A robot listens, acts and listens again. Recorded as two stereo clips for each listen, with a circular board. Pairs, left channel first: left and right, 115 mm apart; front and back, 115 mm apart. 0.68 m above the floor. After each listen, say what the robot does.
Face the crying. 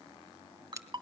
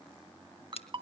Keep listening.
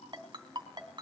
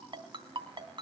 Keep listening.
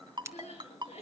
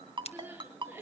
Turn 110° left.
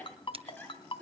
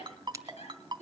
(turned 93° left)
Turn 15° left.
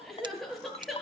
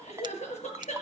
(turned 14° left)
Found it: crying, straight ahead.